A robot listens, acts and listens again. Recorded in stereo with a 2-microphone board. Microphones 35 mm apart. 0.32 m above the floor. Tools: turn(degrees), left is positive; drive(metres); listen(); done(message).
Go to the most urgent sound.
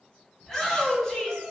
turn(degrees=30)
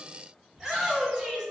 turn(degrees=-15)
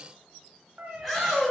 drive(metres=1.0)
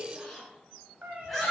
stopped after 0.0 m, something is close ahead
done("Something is in my way. I am facing the shout but have not reached it.")